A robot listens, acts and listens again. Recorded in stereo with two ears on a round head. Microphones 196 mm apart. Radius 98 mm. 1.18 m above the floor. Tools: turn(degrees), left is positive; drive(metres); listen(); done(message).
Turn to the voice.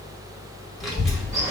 turn(degrees=30)
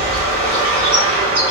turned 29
turn(degrees=-30)
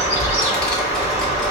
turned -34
done("Found it: a child speaking, straight ahead.")